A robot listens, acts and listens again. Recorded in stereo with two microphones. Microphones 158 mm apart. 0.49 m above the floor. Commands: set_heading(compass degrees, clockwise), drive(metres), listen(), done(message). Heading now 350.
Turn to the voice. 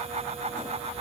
listen()
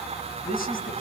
set_heading(280)
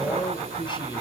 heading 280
set_heading(250)
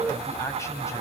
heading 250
set_heading(230)
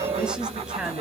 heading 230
done("Facing the man speaking.")